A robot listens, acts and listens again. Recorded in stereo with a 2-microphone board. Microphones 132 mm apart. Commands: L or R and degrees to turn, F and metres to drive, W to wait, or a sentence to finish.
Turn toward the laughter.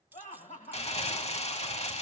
L75
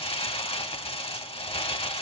W
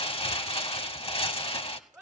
Found it: laughter, straight ahead.